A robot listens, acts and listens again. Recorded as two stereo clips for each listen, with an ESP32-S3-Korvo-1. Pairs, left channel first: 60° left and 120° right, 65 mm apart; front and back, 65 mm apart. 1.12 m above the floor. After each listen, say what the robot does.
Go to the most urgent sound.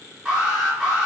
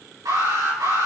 Turn 175° left.
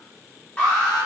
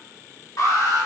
Drive 1.0 m forward.
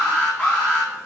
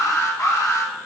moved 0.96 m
Drive 1.0 m forward.
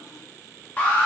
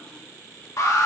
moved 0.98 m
Drive 1.0 m forward.
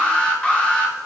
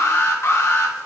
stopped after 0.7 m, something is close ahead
Arrived at the alarm, straight ahead.